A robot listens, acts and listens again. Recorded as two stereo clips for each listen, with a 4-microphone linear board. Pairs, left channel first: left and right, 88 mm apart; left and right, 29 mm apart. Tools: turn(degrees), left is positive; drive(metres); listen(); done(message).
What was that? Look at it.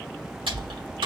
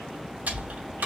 turn(degrees=-90)
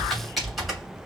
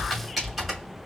done("Facing the typing on a keyboard, 2 to 4 m away.")